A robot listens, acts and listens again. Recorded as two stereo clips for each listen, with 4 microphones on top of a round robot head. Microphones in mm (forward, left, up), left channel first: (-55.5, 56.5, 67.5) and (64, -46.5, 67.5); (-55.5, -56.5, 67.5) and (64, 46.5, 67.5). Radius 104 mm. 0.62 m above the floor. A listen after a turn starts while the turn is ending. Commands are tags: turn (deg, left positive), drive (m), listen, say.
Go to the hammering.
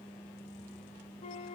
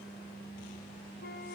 <listen/>
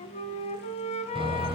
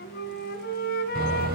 <turn deg="15"/>
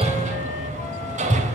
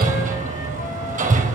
<drive m="1.0"/>
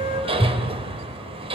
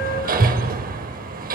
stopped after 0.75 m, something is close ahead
<turn deg="15"/>
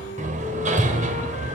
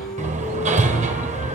<say>Blocked. The hammering is further on, straight ahead.</say>